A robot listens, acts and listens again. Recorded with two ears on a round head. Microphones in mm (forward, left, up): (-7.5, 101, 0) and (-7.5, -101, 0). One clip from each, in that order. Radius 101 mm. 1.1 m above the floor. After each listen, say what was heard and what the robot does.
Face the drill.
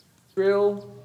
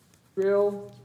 The drill: about 50° left or 130° left. Turn 50° left.
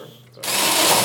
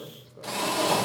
So it is at 80° left. Turn 80° left.
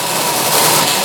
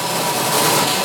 The drill is now 20° left. Turn 20° left.
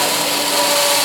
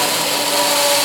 Found it: a drill, straight ahead, under 1 m away.